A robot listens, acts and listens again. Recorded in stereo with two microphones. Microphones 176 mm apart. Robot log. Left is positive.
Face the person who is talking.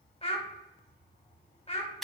note: The child speaking: about 35° left or 145° left.
cmd yaw +35
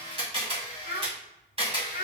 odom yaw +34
note: So it is at 105° left.
cmd yaw +105
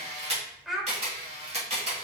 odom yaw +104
end: Facing the child speaking, under 1 m away.